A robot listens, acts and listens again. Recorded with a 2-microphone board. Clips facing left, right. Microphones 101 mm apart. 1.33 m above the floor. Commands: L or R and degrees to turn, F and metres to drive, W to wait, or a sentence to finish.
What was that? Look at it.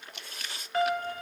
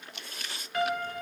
L35
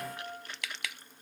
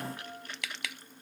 L105
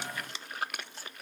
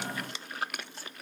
W
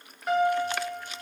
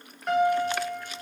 Found it: a piano, straight ahead, 1 to 2 m away.